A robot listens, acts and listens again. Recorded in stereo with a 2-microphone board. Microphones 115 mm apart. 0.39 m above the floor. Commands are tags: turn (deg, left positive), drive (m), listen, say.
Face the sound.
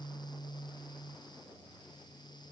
<listen/>
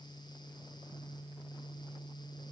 <listen/>
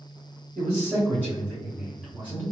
<turn deg="30"/>
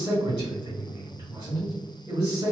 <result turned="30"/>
<turn deg="-25"/>
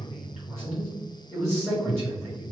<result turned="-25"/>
<say>Found it: a man speaking, straight ahead, 2 to 4 m away.</say>